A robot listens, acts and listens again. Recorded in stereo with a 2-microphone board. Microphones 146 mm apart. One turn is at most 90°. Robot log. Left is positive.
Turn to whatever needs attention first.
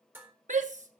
note: The shout: about 55° right or 125° right.
cmd yaw -55
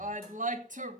note: So it is at 65° right.
cmd yaw -65
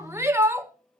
note: The shout is now 20° right.
cmd yaw -20
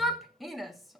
end: Facing the shout, 1 to 2 m away.